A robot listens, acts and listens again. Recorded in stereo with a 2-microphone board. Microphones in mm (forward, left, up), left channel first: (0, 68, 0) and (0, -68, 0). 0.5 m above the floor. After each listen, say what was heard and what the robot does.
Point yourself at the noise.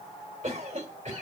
The cough: about 55° right or 125° right. Turn 55° right.
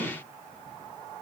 Keep listening.
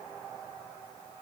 Keep listening.
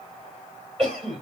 So it is at 50° right. Turn 50° right.
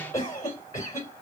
The cough is now 25° left. Turn 25° left.
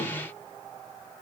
Keep listening.
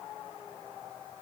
Keep listening.
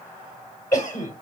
The cough is now 30° left. Turn 30° left.
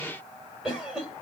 Found it: a cough, straight ahead.